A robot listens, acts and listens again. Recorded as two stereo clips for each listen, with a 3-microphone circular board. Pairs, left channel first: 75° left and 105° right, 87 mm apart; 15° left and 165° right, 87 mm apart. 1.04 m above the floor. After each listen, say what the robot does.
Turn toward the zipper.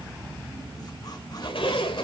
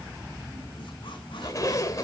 Turn 65° left.
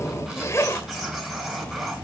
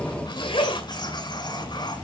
Turn 15° left.
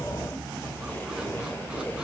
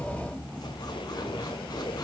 Keep listening.
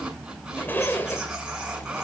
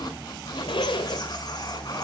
Turn 10° left.
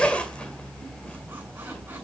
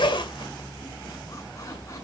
Facing the zipper.